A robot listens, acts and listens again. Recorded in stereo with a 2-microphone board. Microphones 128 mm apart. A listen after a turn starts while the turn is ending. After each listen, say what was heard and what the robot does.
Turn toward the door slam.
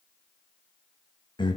Keep listening.
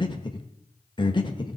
Keep listening.
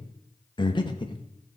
I can't make out a door slam, only breathing.